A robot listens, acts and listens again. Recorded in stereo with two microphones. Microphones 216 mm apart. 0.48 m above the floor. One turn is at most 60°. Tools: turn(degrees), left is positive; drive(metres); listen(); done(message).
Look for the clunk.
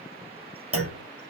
turn(degrees=-60)
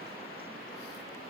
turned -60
turn(degrees=-30)
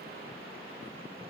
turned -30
done("Facing where the clunk came from. I can't hear it now.")